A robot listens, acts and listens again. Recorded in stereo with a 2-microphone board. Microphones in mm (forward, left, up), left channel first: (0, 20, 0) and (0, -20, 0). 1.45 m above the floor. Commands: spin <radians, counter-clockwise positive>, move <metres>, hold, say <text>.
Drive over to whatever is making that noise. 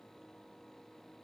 hold
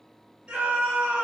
spin -0.70
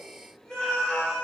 move 1.0
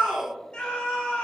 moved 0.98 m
spin 0.17
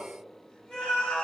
move 1.0
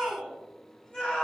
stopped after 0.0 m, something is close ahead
say I am next to the scream.